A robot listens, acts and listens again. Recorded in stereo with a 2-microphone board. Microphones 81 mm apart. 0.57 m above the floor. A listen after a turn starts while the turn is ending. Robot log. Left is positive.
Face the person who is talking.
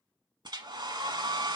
cmd idle
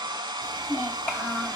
note: The child speaking: about 20° left or 160° left.
cmd yaw +20
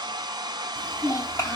note: So it is at 140° left.
cmd yaw +140
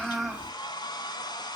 cmd idle
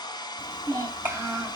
note: The child speaking is now 30° right.
cmd yaw -30
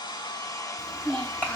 note: The child speaking is now 20° left.
cmd yaw +20
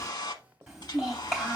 end: Facing the child speaking.